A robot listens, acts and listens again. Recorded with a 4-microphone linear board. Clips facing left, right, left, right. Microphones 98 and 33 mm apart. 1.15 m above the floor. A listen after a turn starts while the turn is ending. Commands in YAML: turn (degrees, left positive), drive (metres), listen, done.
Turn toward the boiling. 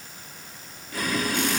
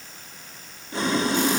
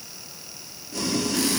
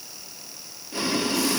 turn: -25
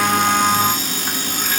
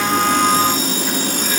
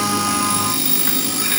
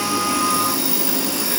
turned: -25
turn: -125
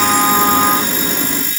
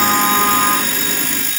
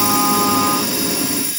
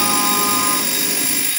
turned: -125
turn: 25
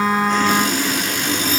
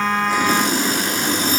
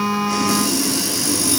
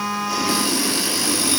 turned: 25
turn: -20
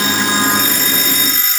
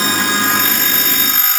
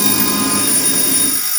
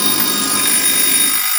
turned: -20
listen: true
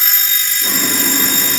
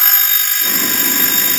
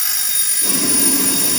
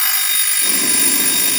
listen: true
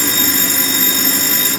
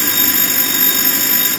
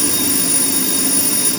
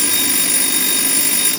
done: "Facing the boiling, 1 to 2 m away."